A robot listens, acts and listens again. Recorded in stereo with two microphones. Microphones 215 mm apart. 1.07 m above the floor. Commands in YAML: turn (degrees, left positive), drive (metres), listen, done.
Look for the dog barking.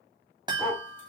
turn: 30
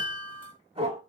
turn: -30
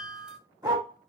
turn: -20
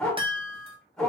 done: "Facing the dog barking."